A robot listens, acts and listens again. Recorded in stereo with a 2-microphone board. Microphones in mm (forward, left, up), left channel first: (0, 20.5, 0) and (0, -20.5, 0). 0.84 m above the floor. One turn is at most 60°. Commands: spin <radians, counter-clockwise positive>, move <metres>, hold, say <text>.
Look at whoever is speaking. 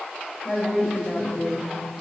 spin -0.52
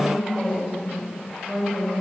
spin -1.05
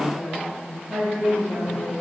spin -1.05
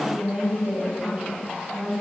spin -0.70
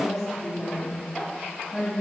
say Found it: a woman speaking, straight ahead, over 4 m away.